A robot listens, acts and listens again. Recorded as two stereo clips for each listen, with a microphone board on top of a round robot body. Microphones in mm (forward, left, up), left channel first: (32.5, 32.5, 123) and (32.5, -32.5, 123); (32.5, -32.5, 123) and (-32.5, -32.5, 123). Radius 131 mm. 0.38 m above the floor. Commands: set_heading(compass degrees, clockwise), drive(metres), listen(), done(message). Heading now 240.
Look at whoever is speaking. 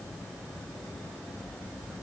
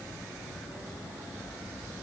listen()
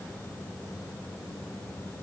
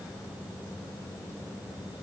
listen()
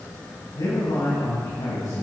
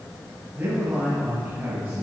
set_heading(130)
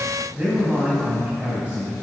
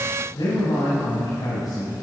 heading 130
set_heading(150)
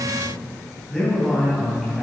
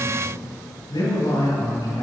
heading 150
done("Facing the man speaking.")